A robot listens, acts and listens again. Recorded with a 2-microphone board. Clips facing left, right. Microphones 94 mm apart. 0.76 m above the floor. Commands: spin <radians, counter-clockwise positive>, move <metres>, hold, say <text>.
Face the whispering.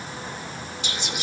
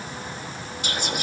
spin -0.87
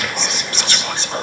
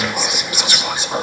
spin -0.17
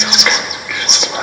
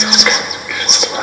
say Found it: whispering, straight ahead.